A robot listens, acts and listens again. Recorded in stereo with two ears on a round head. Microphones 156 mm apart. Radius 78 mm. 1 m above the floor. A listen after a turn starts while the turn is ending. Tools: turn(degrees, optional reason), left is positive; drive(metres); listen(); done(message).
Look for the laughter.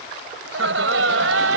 turn(degrees=-90)
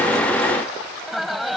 done("Facing the laughter.")